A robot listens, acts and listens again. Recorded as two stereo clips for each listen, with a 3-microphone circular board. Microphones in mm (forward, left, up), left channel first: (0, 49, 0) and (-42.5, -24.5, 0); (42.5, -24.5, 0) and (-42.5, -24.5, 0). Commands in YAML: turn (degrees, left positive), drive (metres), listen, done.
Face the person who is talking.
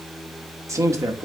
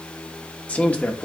turn: -70
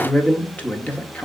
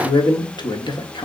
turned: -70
turn: -10
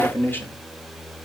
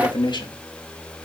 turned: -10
done: "Facing the man speaking."